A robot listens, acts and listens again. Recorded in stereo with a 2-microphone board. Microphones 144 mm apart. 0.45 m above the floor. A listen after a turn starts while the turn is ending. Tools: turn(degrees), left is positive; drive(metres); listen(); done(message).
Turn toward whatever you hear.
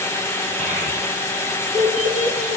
turn(degrees=-60)
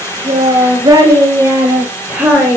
done("Facing the child speaking.")